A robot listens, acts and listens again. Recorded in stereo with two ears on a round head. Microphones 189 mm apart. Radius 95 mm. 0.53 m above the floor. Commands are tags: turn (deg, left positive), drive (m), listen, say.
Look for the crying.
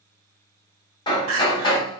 <turn deg="-70"/>
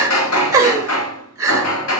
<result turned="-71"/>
<turn deg="-15"/>
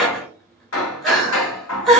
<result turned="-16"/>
<say>Facing the crying.</say>